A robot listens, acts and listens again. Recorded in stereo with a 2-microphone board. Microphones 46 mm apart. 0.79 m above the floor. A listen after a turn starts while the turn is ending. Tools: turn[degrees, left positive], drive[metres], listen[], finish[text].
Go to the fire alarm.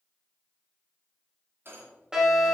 Action: turn[-30]
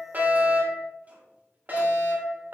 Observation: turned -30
Thought: So it is at 135° right.
Action: turn[-135]
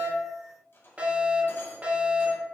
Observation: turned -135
Thought: The fire alarm is now 35° right.
Action: turn[-35]
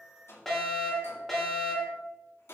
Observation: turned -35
Action: drive[1.0]
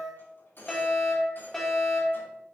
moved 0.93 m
Thought: The fire alarm is now 10° left.
Action: turn[10]
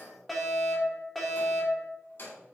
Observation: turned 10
Action: drive[1.0]
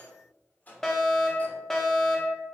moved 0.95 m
Thought: The fire alarm is now 10° left.
Action: turn[10]
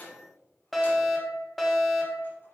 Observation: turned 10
Action: drive[1.0]
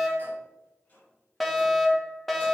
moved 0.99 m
Action: drive[1.0]
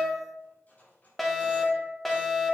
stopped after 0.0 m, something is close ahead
Action: finish[Arrived at the fire alarm, straight ahead.]